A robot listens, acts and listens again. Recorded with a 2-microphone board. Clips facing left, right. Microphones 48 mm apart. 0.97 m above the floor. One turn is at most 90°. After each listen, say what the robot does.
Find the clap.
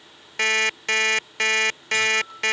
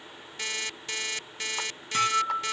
Keep listening.
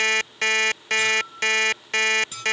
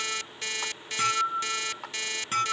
Turn 90° right.
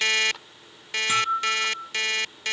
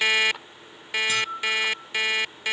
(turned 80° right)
Turn 15° right.
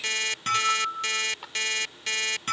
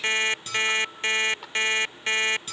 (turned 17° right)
Facing the clap.